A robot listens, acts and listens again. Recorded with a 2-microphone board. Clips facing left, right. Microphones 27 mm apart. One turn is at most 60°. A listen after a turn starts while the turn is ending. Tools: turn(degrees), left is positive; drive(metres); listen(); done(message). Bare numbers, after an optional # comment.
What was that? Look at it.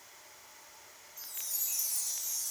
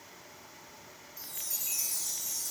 # The chime: about 70° right or 110° right.
turn(-60)
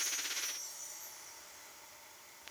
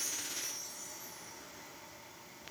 listen()
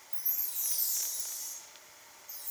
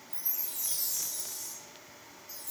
# So it is at 50° right.
turn(-50)
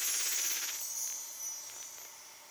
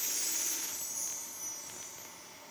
# The chime is now 20° left.
turn(20)
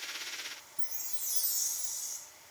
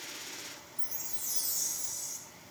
done("Found it: a chime, straight ahead.")